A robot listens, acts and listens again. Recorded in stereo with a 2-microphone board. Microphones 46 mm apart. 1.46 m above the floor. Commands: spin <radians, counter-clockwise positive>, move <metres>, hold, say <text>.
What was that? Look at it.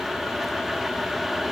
hold
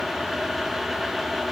hold
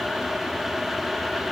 say I can't make out anything to turn to.